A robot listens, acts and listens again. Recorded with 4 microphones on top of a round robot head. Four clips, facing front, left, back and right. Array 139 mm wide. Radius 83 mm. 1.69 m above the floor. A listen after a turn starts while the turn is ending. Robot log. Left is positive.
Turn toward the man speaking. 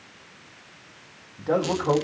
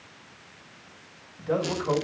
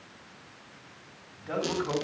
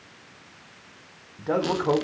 note: The man speaking: 50° right.
cmd yaw -50
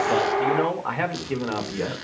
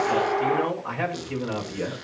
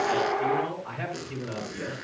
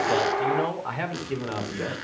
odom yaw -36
note: The man speaking is now 20° right.
cmd yaw -20
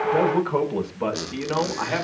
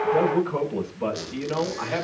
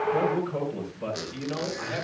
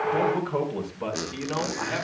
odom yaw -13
note: The man speaking is now 15° right.
cmd yaw -15
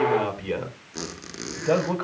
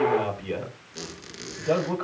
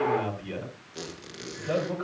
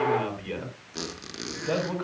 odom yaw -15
end: Found it: a man speaking, straight ahead.